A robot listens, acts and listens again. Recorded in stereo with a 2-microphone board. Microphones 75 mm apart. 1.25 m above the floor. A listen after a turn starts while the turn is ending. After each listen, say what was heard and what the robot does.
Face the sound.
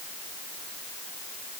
Keep listening.
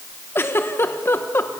The giggle: about 30° left or 150° left. Turn 30° left.
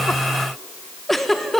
Facing the giggle.